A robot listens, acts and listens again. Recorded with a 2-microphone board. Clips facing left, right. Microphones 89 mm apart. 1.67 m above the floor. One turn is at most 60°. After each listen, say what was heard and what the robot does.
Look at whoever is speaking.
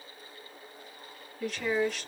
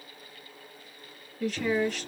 Turn 30° left.
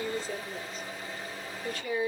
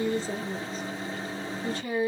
So it is at 30° right. Turn 30° right.
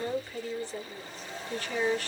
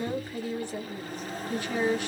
The woman speaking is now 15° right. Turn 15° right.
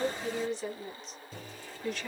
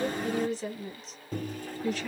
Facing the woman speaking.